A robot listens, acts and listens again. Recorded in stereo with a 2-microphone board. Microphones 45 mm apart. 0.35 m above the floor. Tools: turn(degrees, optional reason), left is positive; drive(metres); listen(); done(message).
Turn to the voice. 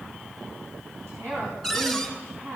turn(degrees=-65, reason="The woman speaking: about 65° right or 115° right.")
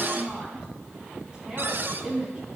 turn(degrees=-30, reason="So it is at 30° right.")
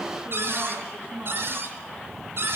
done("Found it: a woman speaking, straight ahead.")